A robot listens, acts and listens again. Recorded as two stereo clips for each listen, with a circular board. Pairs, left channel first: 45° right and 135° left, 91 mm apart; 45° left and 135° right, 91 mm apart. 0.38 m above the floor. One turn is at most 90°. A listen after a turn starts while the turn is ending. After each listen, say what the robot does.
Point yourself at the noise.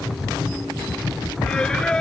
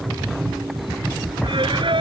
Turn 90° right.
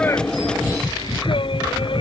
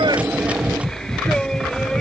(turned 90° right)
Turn 40° right.
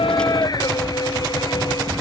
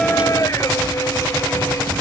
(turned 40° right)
Found it: singing, straight ahead.